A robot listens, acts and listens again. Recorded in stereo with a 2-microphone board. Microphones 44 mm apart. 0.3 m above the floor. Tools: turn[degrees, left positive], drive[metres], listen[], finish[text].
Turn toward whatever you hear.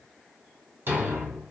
Thought: The thud: about 55° right or 125° right.
Action: turn[-55]
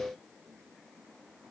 Action: listen[]
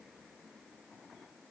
Action: finish[I heard a thud, but can't make it out now. It was about straight ahead or 70° right.]